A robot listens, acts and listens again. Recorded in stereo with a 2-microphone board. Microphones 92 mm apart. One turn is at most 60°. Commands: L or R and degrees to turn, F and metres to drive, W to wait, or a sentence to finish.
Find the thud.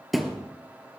L30
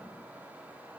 W
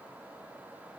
I heard a thud, but can't make it out now. It was about 30° right or 150° left.